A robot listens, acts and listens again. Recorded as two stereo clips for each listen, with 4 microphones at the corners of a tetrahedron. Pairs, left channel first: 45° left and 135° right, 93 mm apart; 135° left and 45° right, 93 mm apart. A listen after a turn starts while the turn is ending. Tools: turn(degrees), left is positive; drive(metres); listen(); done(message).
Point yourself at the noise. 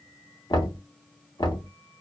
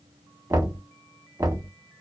done("Found it: knocking, straight ahead, under 1 m away.")